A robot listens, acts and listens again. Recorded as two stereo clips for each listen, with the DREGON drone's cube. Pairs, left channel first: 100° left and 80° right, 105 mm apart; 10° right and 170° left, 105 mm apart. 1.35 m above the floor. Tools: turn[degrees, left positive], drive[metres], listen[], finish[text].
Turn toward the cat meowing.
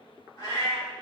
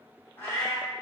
Thought: The cat meowing: 55° left.
Action: turn[55]
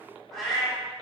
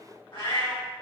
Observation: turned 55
Thought: The cat meowing is now 15° left.
Action: turn[15]
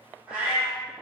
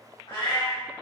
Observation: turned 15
Action: finish[Facing the cat meowing.]